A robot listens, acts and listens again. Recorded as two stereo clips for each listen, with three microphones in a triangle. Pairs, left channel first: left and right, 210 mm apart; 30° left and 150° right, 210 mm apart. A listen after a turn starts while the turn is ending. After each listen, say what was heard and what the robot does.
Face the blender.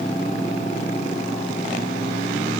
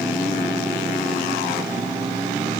Keep listening.
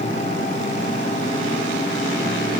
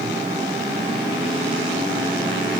Keep listening.
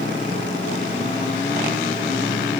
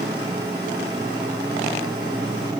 I can't make out a blender to turn to.